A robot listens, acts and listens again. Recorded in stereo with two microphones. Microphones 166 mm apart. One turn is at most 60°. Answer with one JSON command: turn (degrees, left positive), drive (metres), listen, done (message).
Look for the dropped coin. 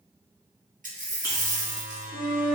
{"turn": -50}
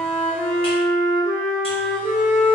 {"listen": true}
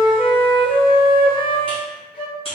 {"done": "I heard a dropped coin, but can't make it out now. It was about straight ahead or 80° right."}